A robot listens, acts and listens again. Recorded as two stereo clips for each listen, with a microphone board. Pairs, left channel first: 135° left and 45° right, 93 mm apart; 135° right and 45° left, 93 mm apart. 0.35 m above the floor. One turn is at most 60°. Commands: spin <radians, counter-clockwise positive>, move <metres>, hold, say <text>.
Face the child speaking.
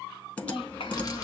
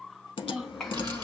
spin 1.05
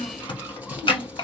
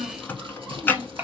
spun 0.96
spin 1.05
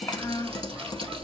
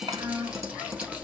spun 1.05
spin 1.05
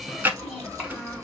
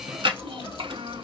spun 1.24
spin 0.70
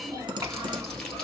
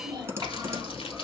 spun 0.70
say Facing the child speaking.